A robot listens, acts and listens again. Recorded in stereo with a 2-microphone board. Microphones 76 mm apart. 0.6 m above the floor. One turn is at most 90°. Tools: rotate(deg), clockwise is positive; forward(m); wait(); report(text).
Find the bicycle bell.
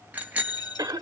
rotate(20)
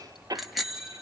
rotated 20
report("Facing the bicycle bell, 2 to 4 m away.")